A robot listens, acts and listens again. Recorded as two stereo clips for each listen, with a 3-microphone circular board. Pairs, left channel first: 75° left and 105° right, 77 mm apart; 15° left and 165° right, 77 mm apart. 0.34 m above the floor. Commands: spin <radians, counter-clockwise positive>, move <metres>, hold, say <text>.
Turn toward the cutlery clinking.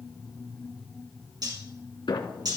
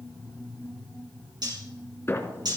spin -2.36
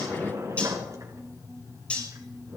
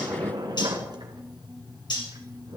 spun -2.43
say Found it: cutlery clinking, straight ahead.